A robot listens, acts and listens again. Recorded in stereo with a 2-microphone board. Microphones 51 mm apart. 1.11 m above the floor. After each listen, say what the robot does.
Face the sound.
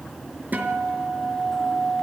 Turn 35° right.
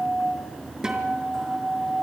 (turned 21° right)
Turn 10° right.
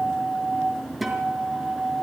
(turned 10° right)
Found it: a guitar, straight ahead, over 4 m away.